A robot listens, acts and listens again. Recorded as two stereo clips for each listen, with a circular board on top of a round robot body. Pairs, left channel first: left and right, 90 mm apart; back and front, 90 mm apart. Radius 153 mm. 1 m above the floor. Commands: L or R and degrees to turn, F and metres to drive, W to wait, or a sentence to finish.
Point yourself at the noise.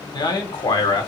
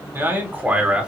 L75
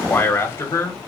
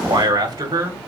L40
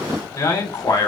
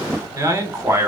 L55
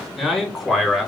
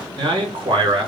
Found it: a man speaking, straight ahead, 2 to 4 m away.